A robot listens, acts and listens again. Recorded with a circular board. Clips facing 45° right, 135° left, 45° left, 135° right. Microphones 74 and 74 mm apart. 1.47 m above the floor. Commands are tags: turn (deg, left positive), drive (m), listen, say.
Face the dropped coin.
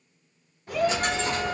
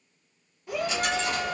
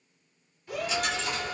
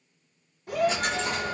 <turn deg="-95"/>
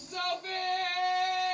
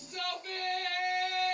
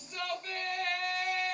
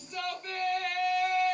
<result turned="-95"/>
<say>Facing where the dropped coin came from. I can't hear it now.</say>